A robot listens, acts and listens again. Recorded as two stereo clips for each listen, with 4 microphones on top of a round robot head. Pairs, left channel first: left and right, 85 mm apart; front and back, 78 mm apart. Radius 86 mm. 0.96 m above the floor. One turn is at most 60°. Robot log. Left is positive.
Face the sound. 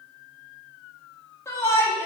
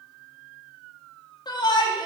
note: The shout: 30° left.
cmd yaw +30
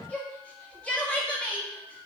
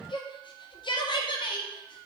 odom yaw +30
note: The shout is now 10° left.
cmd yaw +10
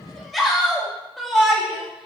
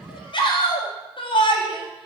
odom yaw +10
end: Facing the shout, 1 to 2 m away.